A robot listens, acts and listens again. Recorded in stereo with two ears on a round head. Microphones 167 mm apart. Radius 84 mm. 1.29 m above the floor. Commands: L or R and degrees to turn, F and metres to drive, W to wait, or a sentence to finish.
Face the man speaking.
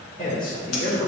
L55
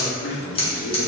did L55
L40
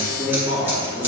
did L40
R15
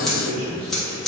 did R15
R10
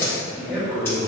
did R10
R10
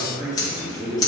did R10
Facing the man speaking, 2 to 4 m away.